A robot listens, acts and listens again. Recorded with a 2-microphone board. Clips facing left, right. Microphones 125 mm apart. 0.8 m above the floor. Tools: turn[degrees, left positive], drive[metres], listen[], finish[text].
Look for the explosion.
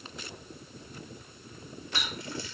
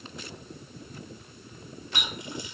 Action: listen[]
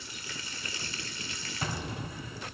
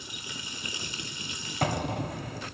Thought: The explosion: about 70° right or 110° right.
Action: turn[-70]
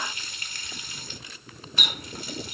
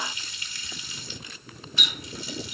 Action: listen[]
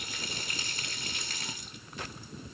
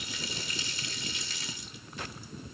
Action: finish[I heard an explosion, but can't make it out now. It was about straight ahead or 40° right.]